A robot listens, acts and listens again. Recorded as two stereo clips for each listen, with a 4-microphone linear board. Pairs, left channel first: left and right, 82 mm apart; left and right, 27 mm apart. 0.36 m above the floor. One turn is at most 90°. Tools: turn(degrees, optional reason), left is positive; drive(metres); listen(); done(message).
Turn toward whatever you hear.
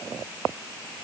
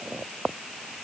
listen()
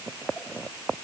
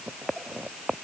listen()
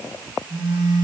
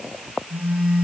turn(degrees=-90)
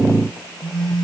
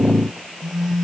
done("Found it: a phone buzzing, straight ahead, over 4 m away.")